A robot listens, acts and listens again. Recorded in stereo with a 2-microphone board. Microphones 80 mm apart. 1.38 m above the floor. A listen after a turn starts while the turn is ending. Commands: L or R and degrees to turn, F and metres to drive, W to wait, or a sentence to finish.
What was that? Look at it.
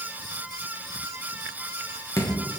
L40
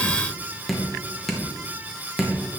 Found it: dripping, straight ahead, 1 to 2 m away.